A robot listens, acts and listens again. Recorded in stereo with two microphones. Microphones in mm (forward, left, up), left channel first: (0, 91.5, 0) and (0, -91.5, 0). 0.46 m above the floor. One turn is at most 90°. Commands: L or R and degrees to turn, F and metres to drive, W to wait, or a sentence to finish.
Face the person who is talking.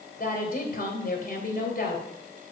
L55
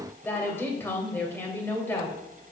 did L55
L15
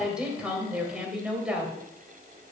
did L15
Facing the woman speaking, 2 to 4 m away.